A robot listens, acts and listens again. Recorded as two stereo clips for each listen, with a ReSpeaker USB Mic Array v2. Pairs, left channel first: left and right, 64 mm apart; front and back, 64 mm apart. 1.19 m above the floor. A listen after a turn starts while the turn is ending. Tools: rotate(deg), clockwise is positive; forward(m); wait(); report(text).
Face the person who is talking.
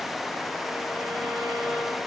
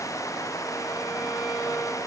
wait()
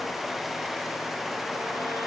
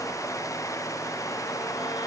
wait()
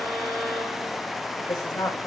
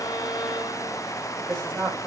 rotate(-80)
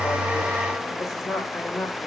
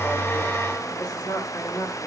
report("Found it: a woman speaking, straight ahead, over 4 m away.")